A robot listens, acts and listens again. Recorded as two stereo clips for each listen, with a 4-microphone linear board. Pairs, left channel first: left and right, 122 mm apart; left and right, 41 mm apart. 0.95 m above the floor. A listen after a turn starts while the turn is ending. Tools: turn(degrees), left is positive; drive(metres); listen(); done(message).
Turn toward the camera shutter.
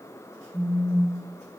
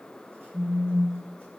listen()
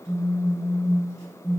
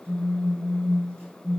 listen()
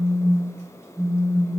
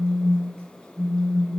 done("I can't make out a camera shutter, only a phone buzzing.")